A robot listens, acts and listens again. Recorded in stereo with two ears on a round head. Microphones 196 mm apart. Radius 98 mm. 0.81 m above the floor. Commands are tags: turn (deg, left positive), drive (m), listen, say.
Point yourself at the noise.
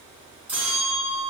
<turn deg="-30"/>
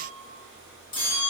<turn deg="25"/>
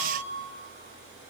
<turn deg="-10"/>
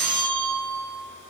<say>Facing the bell, 1 to 2 m away.</say>